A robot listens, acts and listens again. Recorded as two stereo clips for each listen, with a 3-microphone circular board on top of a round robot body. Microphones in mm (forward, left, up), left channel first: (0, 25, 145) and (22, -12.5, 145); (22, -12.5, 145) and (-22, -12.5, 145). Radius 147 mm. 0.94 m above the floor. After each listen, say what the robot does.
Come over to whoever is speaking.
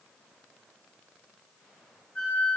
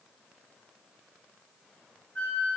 Keep listening.
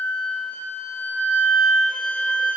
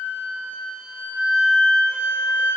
Keep listening.
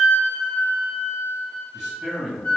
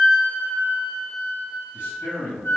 Turn 25° left.
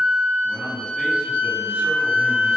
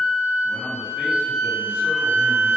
Keep listening.
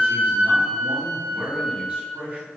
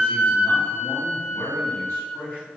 Turn 10° right.
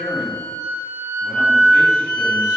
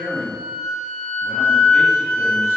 Drive 1.0 m forward.
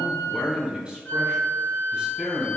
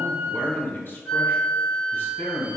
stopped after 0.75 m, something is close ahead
I am next to the man speaking.